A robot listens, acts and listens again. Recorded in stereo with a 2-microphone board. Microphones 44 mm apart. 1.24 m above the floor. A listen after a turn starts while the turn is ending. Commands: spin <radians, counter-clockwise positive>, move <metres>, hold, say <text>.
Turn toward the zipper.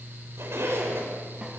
spin -1.22
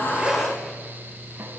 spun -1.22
say Facing the zipper, over 4 m away.